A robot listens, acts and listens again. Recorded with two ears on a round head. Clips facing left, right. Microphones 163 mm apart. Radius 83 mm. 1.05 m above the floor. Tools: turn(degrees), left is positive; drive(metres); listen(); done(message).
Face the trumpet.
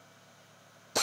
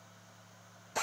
listen()
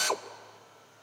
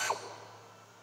listen()
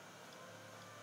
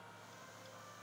done("I can't make out a trumpet, only a drill.")